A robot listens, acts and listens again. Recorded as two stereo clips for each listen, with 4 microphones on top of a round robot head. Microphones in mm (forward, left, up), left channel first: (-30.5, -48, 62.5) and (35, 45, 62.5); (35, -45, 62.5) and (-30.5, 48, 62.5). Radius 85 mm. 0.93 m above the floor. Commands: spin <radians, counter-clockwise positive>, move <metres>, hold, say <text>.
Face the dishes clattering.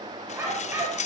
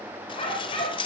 spin -1.83
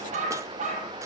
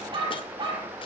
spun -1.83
hold
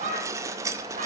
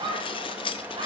spin -0.17
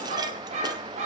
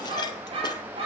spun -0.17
hold
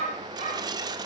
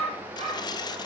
say Found it: dishes clattering, straight ahead, 1 to 2 m away.